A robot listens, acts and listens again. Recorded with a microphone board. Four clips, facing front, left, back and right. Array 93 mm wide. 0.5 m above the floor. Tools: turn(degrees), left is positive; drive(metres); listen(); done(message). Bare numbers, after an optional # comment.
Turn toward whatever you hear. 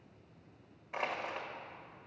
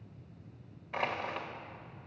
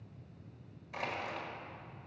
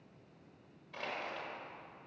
# The crushing: 60° left.
turn(60)
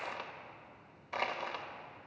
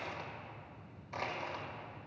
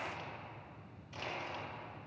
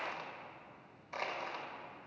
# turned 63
done("Found it: crushing, straight ahead.")